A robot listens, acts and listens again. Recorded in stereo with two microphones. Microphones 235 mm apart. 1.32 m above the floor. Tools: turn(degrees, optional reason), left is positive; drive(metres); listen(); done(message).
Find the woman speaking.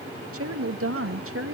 turn(degrees=-65, reason="The woman speaking: about 65° right or 115° right.")
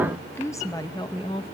turn(degrees=25, reason="So it is at 25° left.")
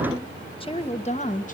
turn(degrees=35, reason="The woman speaking is now 35° left.")
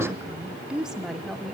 done("Facing the woman speaking, 2 to 4 m away.")